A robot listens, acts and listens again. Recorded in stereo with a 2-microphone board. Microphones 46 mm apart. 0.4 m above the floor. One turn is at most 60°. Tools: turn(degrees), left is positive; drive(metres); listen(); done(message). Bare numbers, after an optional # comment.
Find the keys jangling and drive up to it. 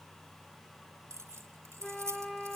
turn(-60)
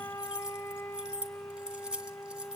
# So it is at 20° right.
turn(-20)
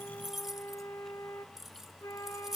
drive(1.0)
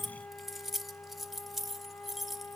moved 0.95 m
drive(1.0)
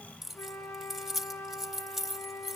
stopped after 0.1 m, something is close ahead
done("Arrived at the keys jangling, straight ahead.")